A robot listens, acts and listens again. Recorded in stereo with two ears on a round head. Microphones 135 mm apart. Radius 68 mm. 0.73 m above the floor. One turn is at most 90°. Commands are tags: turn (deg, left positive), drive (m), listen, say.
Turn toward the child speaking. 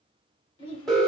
<turn deg="35"/>
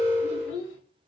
<turn deg="90"/>
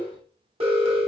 <turn deg="-25"/>
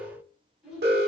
<say>Found it: a child speaking, straight ahead, 2 to 4 m away.</say>